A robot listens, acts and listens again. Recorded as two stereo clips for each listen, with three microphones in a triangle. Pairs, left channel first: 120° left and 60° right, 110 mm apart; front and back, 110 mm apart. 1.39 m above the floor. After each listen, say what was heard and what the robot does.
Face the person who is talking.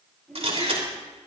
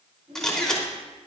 The child speaking: 155° right. Turn 155° right.
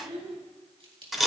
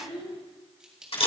The child speaking is now 35° right. Turn 35° right.
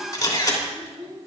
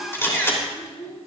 Found it: a child speaking, straight ahead.